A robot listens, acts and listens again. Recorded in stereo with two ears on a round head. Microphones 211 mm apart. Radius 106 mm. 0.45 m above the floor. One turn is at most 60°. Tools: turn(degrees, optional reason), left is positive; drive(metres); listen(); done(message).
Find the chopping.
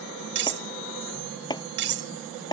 turn(degrees=20, reason="The chopping: about 20° left or 160° left.")
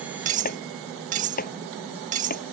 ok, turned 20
turn(degrees=60, reason="So it is at 140° left.")
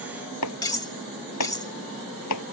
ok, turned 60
turn(degrees=60, reason="The chopping is now 85° left.")
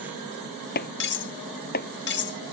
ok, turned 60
turn(degrees=40, reason="The chopping is now 40° left.")
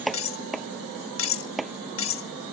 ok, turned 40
done("Facing the chopping.")